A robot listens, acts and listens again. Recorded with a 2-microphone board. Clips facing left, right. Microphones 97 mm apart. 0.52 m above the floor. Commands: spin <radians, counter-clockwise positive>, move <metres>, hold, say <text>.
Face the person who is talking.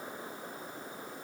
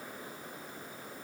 hold
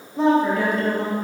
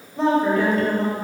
spin 0.52
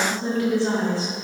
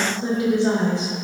spin -0.44
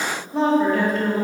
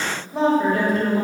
say Facing the woman speaking.